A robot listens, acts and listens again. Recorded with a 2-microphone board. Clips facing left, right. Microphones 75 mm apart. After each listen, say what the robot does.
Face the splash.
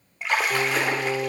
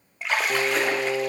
Turn 30° left.
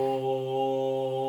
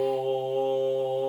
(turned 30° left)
Keep listening.
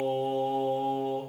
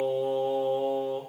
I heard a splash, but can't make it out now. It was about 25° right or 145° left.